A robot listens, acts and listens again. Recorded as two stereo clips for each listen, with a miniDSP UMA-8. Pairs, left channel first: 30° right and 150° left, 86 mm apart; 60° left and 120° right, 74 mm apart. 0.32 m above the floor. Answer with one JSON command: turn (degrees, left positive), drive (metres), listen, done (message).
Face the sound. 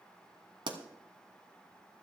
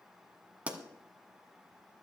{"turn": 170}
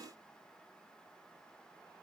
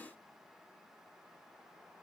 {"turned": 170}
{"done": "I heard a pop from this way, but can't make it out now."}